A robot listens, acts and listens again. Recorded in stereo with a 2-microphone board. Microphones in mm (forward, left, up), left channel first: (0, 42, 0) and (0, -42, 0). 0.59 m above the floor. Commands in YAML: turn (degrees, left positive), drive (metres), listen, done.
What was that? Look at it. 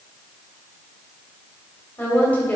turn: 20
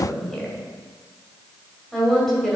done: "Facing the woman speaking, 2 to 4 m away."